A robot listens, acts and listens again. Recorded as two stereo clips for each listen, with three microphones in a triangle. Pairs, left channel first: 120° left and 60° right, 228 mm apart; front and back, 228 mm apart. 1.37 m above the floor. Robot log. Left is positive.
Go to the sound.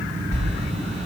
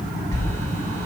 note: The sliding door: 75° left.
cmd yaw +75
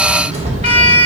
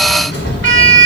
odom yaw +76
cmd fwd 1.0
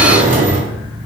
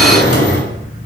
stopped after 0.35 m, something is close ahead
end: Blocked. The sliding door is further on, straight ahead.